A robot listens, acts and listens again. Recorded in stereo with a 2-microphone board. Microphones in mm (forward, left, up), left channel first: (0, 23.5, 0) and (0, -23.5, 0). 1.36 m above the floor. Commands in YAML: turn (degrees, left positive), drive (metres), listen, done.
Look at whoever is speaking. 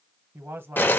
turn: -50
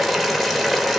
listen: true
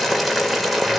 listen: true
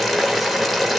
done: "I heard a man speaking, but can't make it out now. It was about straight ahead or 80° right."